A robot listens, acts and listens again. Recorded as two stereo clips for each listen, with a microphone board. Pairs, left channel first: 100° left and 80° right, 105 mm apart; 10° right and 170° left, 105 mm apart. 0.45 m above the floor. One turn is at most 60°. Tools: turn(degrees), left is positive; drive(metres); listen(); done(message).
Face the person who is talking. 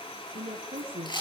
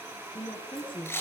turn(degrees=-50)
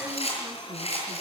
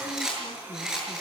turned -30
turn(degrees=-20)
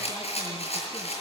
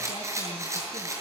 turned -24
listen()
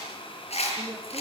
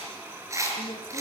done("Facing where the woman speaking came from. I can't hear it now.")